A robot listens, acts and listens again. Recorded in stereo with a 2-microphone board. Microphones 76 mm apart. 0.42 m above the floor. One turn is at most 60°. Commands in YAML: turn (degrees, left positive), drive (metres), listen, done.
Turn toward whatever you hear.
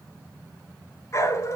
turn: 40
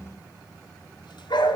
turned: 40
turn: 60
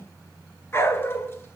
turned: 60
turn: 35
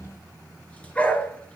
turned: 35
turn: 20
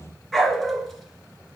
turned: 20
done: "Facing the dog barking, 1 to 2 m away."